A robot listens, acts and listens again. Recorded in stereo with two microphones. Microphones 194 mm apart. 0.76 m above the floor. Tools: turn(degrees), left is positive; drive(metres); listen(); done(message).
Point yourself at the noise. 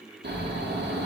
turn(degrees=-60)
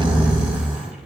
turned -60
turn(degrees=-10)
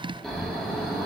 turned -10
done("Found it: snoring, straight ahead.")